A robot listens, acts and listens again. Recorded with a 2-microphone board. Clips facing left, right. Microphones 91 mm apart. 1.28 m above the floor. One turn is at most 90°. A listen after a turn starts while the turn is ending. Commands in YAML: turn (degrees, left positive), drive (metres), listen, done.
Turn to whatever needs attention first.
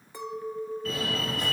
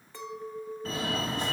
turn: -30
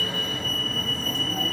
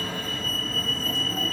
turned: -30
done: "Found it: a fire alarm, straight ahead, over 4 m away."